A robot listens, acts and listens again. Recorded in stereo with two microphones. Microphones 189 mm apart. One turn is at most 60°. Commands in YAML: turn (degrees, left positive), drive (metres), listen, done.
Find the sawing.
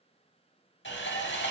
turn: 60
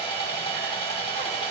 turn: 30
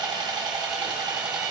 turn: -20
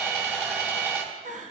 turn: -10
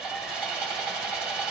done: "Found it: sawing, straight ahead, 1 to 2 m away."